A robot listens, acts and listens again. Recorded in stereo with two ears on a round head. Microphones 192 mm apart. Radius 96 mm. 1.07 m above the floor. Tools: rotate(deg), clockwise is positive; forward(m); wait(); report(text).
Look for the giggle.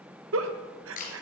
rotate(65)
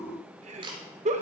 rotate(35)
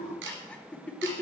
report("Found it: a giggle, straight ahead.")